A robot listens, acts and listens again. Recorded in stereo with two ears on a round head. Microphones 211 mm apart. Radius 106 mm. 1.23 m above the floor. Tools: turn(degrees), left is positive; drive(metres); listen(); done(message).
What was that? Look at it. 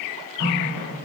turn(degrees=65)
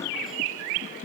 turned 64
listen()
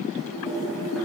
done("Found it: a running tap, straight ahead, over 4 m away.")